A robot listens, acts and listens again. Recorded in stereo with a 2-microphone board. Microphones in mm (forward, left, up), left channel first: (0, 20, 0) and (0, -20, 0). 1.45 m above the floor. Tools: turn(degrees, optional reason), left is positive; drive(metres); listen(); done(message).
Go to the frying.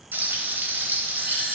turn(degrees=-70, reason="The frying: about 70° right or 110° right.")
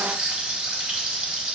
turn(degrees=-35, reason="So it is at 35° right.")
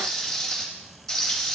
turn(degrees=10, reason="The frying is now 10° left.")
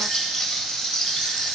drive(metres=1.0)
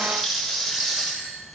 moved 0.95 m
drive(metres=1.0)
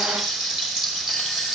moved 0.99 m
drive(metres=1.0)
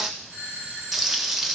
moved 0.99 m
turn(degrees=-10, reason="The frying is now 10° right.")
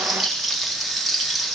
drive(metres=1.0)
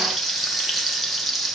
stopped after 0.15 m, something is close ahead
done("Arrived at the frying, straight ahead.")